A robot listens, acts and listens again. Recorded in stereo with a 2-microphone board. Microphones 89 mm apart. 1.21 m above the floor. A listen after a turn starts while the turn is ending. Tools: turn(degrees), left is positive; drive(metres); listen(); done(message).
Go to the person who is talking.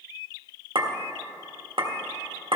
listen()
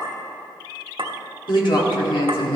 turn(degrees=65)
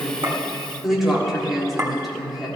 drive(metres=1.0)
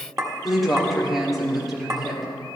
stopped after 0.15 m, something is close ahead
done("Blocked. The woman speaking is further on, straight ahead.")